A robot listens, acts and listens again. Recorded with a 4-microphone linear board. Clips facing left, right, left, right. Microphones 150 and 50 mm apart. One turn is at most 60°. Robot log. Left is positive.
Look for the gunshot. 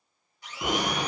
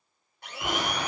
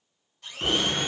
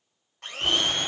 note: The gunshot: about 20° left or 160° left.
cmd yaw +20
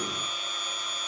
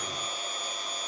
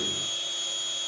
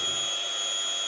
cmd idle
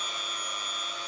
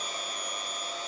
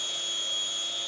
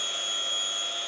end: I heard a gunshot, but can't make it out now. It was about straight ahead or 140° left.